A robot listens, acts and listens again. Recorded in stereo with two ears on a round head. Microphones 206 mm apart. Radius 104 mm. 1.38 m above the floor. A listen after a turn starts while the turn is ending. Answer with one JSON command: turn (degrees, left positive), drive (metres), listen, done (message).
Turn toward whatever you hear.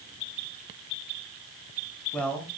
{"turn": 30}
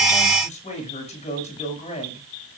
{"turn": 150}
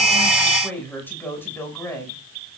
{"turn": 10}
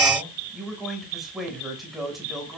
{"done": "Facing the man speaking."}